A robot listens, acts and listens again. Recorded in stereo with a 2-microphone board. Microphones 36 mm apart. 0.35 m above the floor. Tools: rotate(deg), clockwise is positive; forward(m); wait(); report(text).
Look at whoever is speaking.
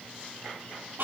wait()
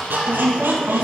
rotate(55)
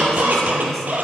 wait()
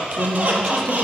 rotate(-10)
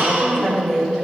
rotate(-10)
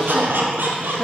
wait()
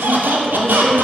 rotate(-10)
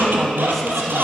report("Facing the woman speaking, 1 to 2 m away.")